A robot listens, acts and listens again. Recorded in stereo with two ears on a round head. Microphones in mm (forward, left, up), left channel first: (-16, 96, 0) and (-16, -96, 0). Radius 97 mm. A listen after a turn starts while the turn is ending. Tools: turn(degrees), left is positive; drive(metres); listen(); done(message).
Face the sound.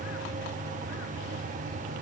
listen()
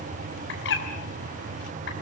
turn(degrees=65)
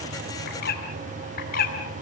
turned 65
turn(degrees=45)
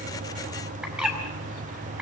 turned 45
done("Found it: a bird, straight ahead, over 4 m away.")